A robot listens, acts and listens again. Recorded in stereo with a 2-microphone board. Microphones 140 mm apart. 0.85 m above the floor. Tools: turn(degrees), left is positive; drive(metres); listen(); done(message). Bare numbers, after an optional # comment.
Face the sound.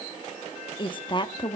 # The woman speaking: about 35° left or 145° left.
turn(35)
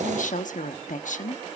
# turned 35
# So it is at 105° left.
turn(105)
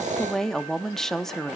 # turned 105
done("Found it: a woman speaking, straight ahead, 1 to 2 m away.")